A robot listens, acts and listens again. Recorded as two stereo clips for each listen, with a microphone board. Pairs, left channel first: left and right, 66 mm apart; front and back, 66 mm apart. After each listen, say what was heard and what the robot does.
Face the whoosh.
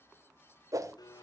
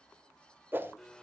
The whoosh: 120° right. Turn 120° right.
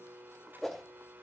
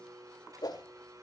Found it: a whoosh, straight ahead, 1 to 2 m away.